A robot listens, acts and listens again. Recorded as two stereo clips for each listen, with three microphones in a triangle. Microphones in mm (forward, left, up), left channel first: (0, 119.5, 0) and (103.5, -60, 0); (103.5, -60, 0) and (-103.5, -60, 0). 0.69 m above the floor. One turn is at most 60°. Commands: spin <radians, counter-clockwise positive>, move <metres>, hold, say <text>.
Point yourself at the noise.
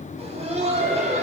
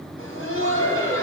say Facing the laughter.